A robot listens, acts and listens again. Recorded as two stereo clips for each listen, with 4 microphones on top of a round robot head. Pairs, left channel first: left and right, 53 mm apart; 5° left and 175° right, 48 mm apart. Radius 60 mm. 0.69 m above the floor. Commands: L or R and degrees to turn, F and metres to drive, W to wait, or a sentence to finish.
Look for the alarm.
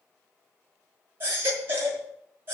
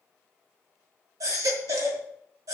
W
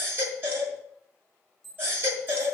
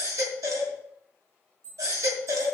L175
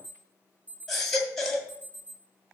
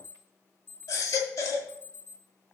R30
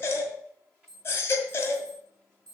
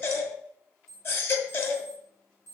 L10
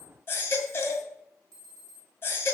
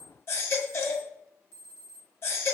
Facing the alarm, over 4 m away.